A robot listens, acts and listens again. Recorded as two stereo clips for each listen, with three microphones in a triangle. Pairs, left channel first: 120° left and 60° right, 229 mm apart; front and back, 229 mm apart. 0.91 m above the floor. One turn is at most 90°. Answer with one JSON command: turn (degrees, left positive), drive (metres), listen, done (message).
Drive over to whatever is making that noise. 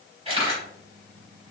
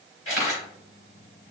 {"drive": 1.0}
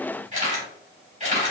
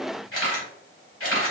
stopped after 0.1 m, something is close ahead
{"done": "Blocked. The camera shutter is further on, straight ahead."}